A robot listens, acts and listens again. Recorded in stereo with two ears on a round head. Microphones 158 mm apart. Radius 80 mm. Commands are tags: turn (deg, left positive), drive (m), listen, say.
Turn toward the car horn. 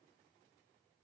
<listen/>
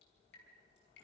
<listen/>
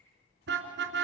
<turn deg="-90"/>
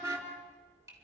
<turn deg="-15"/>
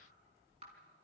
<listen/>
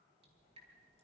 <listen/>
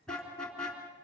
<say>Found it: a car horn, straight ahead, 2 to 4 m away.</say>